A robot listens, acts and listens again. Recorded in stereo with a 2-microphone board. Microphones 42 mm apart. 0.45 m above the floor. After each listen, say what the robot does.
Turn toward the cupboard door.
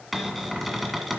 Turn 30° left.
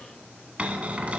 Turn 30° right.
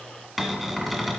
Found it: a cupboard door, straight ahead, 1 to 2 m away.